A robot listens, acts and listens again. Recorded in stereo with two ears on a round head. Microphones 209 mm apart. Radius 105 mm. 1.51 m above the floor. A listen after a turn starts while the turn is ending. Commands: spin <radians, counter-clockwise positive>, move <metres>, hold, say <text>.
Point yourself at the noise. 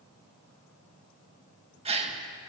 spin -0.44
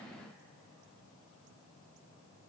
hold
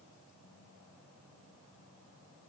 say I heard a gasp, but can't make it out now. It was about straight ahead or 130° right.